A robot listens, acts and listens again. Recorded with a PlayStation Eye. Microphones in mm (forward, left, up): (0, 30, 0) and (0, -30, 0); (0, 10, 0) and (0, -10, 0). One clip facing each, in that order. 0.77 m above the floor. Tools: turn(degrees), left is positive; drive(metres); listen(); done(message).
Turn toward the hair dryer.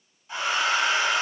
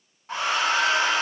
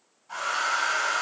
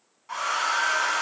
turn(degrees=-90)
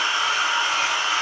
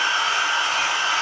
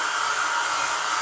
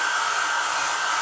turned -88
turn(degrees=-10)
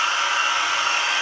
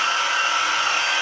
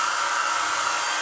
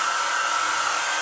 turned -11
done("Facing the hair dryer.")